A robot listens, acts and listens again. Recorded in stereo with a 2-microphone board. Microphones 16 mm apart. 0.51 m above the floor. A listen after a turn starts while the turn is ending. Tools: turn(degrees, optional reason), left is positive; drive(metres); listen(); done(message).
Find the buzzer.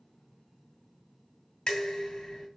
listen()
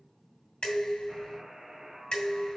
turn(degrees=-55, reason="The buzzer: about 55° right or 125° right.")
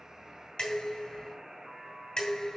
turn(degrees=-70, reason="So it is at 70° right.")
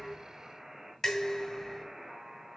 turn(degrees=-40, reason="The buzzer is now 40° right.")
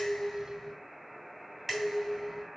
done("Facing the buzzer, 2 to 4 m away.")